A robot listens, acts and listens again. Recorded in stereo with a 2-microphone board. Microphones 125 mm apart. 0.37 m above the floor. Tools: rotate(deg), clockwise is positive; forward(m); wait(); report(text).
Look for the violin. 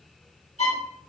rotate(-60)
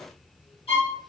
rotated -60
rotate(-55)
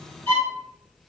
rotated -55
rotate(-15)
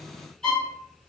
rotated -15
report("Found it: a violin, straight ahead.")